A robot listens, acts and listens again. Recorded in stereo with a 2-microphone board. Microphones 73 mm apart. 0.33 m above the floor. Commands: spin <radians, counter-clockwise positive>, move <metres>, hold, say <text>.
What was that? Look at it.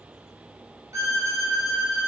spin -0.79
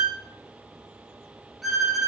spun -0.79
say Facing the violin, 1 to 2 m away.